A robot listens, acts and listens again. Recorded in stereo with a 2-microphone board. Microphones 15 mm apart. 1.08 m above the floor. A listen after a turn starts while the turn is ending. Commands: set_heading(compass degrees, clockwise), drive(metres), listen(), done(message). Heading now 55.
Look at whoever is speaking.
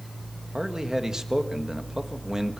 set_heading(95)
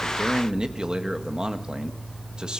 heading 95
set_heading(190)
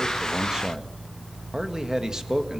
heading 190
set_heading(240)
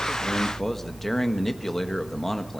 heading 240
set_heading(220)
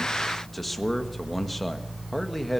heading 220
set_heading(210)
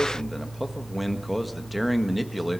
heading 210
done("Found it: a man speaking, straight ahead, 1 to 2 m away.")